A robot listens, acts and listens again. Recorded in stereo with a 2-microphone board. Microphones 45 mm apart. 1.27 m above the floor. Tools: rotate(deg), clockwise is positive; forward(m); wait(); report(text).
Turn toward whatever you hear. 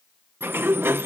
rotate(60)
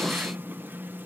rotate(55)
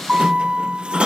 rotate(25)
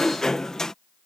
rotate(-15)
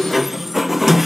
report("Found it: a sliding door, straight ahead.")